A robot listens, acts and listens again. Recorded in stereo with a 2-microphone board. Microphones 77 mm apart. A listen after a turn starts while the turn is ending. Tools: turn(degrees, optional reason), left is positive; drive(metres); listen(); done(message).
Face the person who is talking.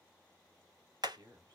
turn(degrees=-60, reason="The man speaking: about 60° right or 120° right.")
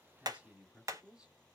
turn(degrees=-10, reason="So it is at 10° right.")
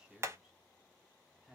done("Facing the man speaking.")